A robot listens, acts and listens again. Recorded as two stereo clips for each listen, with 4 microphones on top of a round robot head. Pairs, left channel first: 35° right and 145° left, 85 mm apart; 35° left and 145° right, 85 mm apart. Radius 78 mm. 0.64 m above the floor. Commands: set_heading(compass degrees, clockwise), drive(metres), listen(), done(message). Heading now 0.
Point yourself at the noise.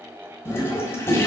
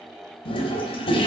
set_heading(330)
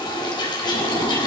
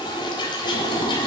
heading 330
done("Facing the toilet flushing.")